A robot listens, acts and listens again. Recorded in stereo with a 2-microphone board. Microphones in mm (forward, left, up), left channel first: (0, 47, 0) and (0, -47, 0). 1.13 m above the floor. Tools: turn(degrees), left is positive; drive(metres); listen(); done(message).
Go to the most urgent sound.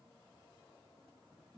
listen()
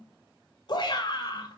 turn(degrees=50)
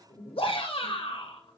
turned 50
turn(degrees=80)
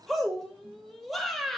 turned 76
drive(metres=1.0)
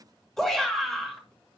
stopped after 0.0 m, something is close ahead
done("Something is in my way. I am facing the shout but have not reached it.")